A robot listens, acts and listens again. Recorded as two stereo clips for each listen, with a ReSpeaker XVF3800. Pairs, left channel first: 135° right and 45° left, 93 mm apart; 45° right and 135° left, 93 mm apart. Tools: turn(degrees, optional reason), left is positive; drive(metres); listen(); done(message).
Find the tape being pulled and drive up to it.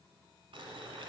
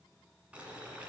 listen()
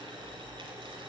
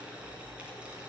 listen()
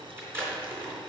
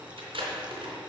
turn(degrees=110, reason="The tape being pulled: 110° left.")
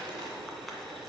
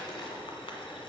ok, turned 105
drive(metres=1.0)
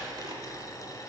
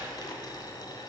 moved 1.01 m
listen()
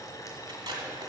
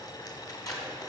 drive(metres=1.0)
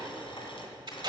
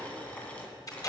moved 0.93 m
drive(metres=1.0)
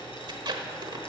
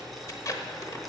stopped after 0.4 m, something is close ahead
done("Arrived at the tape being pulled, straight ahead.")